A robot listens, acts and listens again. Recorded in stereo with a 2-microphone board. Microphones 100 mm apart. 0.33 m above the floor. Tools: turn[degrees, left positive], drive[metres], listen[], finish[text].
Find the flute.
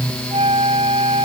Thought: The flute: about 75° right or 105° right.
Action: turn[-75]
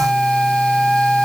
Action: finish[Found it: a flute, straight ahead.]